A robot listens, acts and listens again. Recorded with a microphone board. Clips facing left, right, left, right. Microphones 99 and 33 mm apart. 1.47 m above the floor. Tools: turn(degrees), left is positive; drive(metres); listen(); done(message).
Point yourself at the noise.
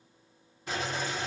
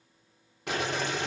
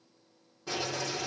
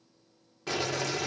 turn(degrees=-70)
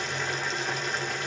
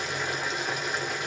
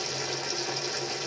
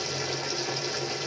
done("Found it: boiling, straight ahead.")